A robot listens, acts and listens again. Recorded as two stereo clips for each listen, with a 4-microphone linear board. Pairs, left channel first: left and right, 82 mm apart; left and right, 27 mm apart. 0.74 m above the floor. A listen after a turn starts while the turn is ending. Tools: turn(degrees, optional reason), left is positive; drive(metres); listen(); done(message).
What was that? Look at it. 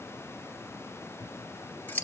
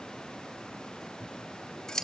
turn(degrees=20, reason="The scissors: about 20° left or 160° left.")
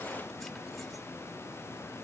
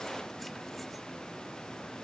listen()
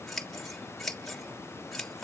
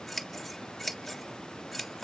done("Facing the scissors.")